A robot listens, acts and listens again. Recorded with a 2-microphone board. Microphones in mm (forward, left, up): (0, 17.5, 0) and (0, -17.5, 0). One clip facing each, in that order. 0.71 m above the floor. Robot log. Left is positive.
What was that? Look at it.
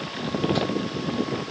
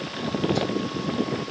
cmd idle
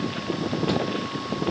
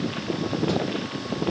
cmd idle
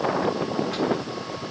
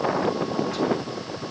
end: I can't make out anything.